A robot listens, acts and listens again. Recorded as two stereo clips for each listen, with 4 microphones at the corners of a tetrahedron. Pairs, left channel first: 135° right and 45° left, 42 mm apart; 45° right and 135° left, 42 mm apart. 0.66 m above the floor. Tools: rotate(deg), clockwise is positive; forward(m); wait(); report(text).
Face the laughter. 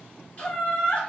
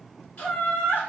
rotate(75)
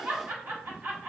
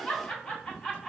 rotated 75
rotate(-30)
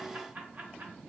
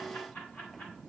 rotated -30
wait()
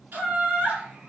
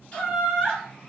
rotate(-20)
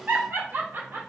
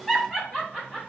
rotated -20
rotate(-30)
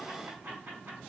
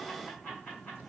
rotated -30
report("Found it: laughter, straight ahead, 1 to 2 m away.")